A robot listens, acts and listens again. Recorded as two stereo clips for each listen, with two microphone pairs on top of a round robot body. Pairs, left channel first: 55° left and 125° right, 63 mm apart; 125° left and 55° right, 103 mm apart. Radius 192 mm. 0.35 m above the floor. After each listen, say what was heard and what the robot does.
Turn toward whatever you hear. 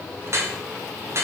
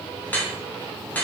The dripping: 165° right. Turn 165° right.
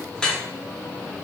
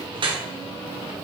The dripping is now 25° right. Turn 25° right.
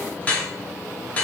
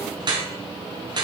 The dripping is now 15° right. Turn 15° right.
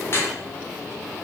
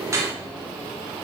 Found it: dripping, straight ahead, 1 to 2 m away.